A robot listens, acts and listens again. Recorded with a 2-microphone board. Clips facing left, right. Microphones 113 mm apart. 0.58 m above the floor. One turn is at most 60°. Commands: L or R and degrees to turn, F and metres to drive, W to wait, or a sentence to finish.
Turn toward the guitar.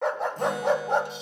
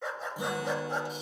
R30
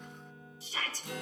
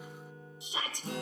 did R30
R60
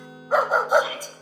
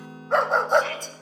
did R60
R60
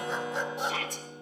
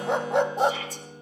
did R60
R40
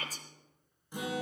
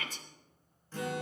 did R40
L15
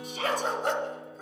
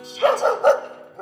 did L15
Found it: a guitar, straight ahead.